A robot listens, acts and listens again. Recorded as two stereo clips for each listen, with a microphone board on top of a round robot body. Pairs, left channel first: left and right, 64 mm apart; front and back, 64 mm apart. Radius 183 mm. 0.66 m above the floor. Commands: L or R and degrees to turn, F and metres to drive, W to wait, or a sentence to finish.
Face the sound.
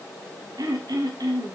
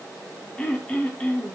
R70
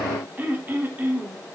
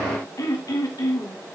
R30
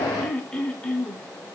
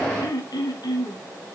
L15
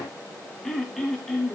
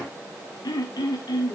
Found it: throat clearing, straight ahead, 1 to 2 m away.